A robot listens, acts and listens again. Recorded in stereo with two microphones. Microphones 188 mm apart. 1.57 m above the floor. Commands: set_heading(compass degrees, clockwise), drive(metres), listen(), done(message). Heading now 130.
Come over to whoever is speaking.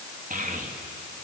set_heading(175)
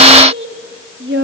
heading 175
set_heading(260)
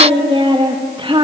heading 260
set_heading(290)
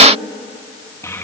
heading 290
set_heading(275)
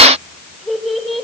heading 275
drive(1.0)
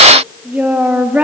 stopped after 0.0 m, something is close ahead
set_heading(285)
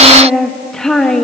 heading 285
done("Something is in my way. I am facing the child speaking but have not reached it.")